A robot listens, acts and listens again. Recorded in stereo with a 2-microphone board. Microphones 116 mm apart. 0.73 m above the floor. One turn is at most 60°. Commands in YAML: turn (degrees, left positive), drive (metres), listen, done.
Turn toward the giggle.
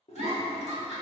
turn: -60
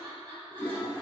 turn: -35
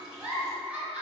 turn: -10
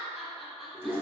done: "Facing the giggle."